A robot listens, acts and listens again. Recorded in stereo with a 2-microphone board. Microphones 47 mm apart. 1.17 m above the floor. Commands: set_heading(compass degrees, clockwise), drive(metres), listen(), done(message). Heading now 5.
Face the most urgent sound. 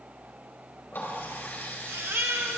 set_heading(70)
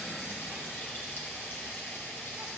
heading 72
listen()
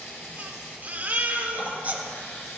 set_heading(112)
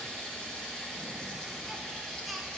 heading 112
listen()
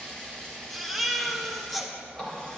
done("Facing the baby crying.")